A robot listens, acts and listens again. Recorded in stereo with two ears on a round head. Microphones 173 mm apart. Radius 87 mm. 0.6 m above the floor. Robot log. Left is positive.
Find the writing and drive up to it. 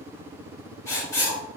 note: The writing: about 15° left or 165° left.
cmd yaw +15
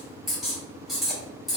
cmd fwd 1.0
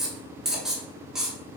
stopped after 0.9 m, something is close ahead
end: Arrived at the writing, straight ahead.